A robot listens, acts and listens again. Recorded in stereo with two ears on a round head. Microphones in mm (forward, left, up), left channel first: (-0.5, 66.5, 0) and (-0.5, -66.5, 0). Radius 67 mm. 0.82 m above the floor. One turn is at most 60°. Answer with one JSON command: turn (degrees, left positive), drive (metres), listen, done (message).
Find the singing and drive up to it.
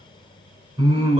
{"turn": -40}
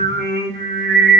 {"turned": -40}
{"turn": -60}
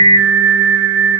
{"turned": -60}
{"turn": -50}
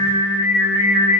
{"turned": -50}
{"turn": -10}
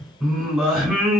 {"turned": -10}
{"drive": 1.0}
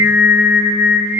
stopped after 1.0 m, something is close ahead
{"turn": -15}
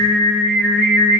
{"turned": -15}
{"done": "I am next to the singing."}